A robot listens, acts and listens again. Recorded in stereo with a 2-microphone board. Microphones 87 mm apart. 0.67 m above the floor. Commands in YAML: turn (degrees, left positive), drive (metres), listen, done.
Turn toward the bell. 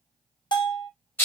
turn: 60
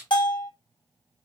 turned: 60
turn: 60
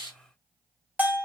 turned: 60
turn: -20
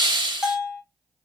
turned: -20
turn: -10
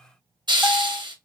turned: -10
listen: true
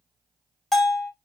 done: "Found it: a bell, straight ahead."